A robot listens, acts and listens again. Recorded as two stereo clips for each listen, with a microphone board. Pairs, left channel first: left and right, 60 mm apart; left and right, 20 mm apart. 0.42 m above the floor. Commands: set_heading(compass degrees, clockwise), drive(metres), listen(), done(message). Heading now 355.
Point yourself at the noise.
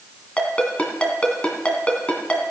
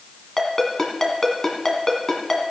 set_heading(335)
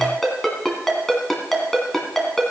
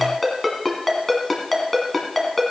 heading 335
done("Found it: a ringtone, straight ahead.")